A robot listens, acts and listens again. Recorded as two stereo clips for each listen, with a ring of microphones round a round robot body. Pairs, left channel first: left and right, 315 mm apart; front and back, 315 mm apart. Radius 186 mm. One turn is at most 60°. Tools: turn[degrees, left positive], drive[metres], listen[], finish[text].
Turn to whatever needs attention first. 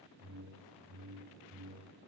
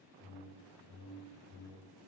Action: listen[]
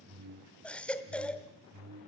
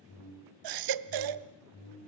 Thought: The baby crying: 175° left.
Action: turn[60]
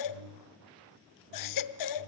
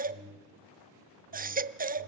Thought: The baby crying is now 115° left.
Action: turn[60]
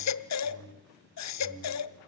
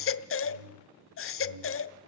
Thought: The baby crying is now 50° left.
Action: turn[50]
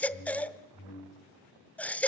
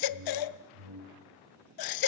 Action: finish[Found it: a baby crying, straight ahead, under 1 m away.]